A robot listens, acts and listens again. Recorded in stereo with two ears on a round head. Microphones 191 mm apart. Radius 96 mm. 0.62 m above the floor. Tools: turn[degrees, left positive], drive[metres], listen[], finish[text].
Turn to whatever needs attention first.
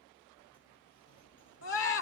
Thought: The scream: about 60° left or 120° left.
Action: turn[60]
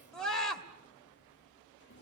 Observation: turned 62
Action: finish[Found it: a scream, straight ahead.]